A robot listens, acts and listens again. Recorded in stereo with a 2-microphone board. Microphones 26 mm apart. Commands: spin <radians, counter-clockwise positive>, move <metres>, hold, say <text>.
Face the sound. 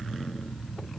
hold
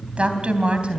spin -0.87
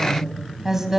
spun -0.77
spin -0.26
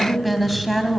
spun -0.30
say Facing the woman speaking, 2 to 4 m away.